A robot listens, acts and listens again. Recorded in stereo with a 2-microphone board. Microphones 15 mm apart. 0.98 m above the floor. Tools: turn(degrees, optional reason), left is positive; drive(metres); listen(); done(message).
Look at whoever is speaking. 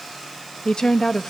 turn(degrees=55, reason="The woman speaking: about 55° left or 125° left.")
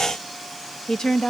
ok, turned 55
turn(degrees=65, reason="So it is at 65° left.")
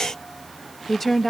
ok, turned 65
turn(degrees=15, reason="The woman speaking is now 15° left.")
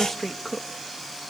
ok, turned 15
done("Found it: a woman speaking, straight ahead, under 1 m away.")